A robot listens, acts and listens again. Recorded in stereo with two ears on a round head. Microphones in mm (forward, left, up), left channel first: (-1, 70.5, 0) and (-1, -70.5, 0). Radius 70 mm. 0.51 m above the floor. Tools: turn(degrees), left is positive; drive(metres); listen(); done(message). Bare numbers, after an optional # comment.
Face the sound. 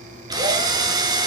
# The drill: about 25° right or 155° right.
turn(-25)
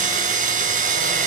# So it is at 130° right.
turn(-130)
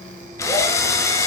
# The drill is now 20° left.
turn(20)
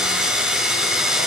done("Facing the drill.")